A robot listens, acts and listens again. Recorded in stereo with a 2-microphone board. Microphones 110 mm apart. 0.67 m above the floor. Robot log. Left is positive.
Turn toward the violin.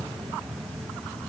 cmd idle
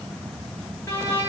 note: The violin: about 30° left or 150° left.
cmd yaw +30
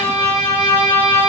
note: So it is at 120° left.
cmd yaw +120
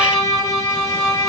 note: The violin is now 25° left.
cmd yaw +25
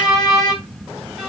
end: Facing the violin, 1 to 2 m away.